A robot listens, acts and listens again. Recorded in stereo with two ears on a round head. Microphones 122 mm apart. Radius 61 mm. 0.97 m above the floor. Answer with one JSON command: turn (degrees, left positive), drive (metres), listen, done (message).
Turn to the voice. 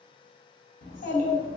{"turn": 65}
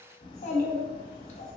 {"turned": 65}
{"turn": 50}
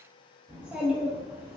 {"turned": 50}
{"turn": -10}
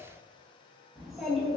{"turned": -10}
{"done": "Found it: a child speaking, straight ahead."}